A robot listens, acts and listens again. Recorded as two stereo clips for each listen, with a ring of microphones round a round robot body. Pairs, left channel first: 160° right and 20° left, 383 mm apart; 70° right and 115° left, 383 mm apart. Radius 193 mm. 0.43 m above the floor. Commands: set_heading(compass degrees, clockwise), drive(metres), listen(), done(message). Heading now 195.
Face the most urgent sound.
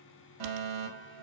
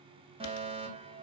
set_heading(155)
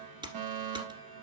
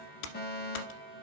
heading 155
done("Found it: a fire alarm, straight ahead.")